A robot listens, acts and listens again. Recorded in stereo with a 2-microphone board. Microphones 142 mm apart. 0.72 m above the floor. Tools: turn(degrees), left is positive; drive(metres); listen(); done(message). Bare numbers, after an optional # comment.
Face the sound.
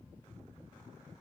listen()
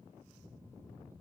listen()
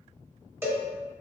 # The cowbell: about 20° right or 160° right.
turn(-20)
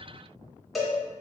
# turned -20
done("Found it: a cowbell, straight ahead, 1 to 2 m away.")